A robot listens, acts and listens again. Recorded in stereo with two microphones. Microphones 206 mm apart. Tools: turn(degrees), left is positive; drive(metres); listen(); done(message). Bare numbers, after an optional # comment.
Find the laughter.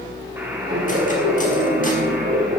# The laughter: about 60° right or 120° right.
turn(-60)
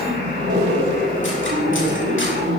# So it is at 65° right.
turn(-65)
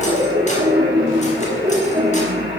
# The laughter is now 25° right.
turn(-25)
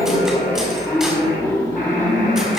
# The laughter is now 15° left.
turn(15)
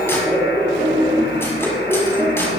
done("Facing the laughter.")